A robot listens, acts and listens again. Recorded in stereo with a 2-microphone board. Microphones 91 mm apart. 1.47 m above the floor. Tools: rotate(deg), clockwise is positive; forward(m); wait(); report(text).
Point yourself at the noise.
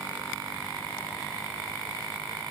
wait()
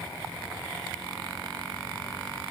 wait()
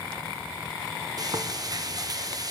rotate(45)
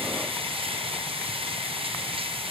rotate(90)
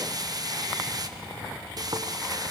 rotate(45)
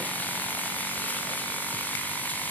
rotate(-20)
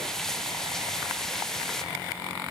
report("Facing the frying, under 1 m away.")